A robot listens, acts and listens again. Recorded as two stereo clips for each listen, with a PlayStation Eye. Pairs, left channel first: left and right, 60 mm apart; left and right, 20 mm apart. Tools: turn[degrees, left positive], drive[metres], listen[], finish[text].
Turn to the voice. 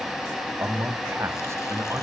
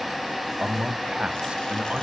Thought: The man speaking: about 55° right or 125° right.
Action: turn[-55]
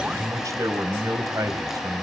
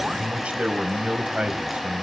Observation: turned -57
Thought: So it is at 70° right.
Action: turn[-70]
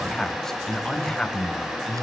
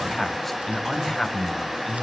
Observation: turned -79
Thought: The man speaking is now 10° left.
Action: turn[10]
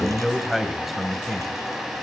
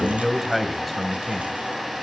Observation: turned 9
Action: finish[Found it: a man speaking, straight ahead, 2 to 4 m away.]